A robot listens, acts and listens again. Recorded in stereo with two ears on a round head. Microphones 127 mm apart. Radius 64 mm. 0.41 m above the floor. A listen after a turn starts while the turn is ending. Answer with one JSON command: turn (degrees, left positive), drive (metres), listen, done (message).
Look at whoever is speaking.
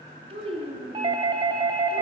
{"turn": -40}
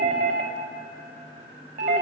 {"listen": true}
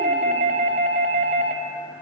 {"listen": true}
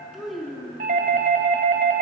{"done": "Found it: a child speaking, straight ahead."}